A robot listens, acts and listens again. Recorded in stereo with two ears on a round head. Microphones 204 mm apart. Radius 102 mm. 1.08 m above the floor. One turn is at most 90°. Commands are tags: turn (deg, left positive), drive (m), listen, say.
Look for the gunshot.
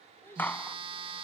<turn deg="30"/>
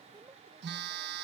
<listen/>
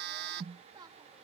<say>I heard a gunshot, but can't make it out now. It was about 20° right or 140° left.</say>